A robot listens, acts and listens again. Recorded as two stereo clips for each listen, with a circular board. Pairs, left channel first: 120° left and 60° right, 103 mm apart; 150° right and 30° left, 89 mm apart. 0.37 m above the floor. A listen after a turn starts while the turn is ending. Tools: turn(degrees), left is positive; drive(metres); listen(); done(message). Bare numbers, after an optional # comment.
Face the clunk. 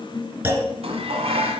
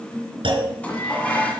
done("Found it: a clunk, straight ahead, 2 to 4 m away.")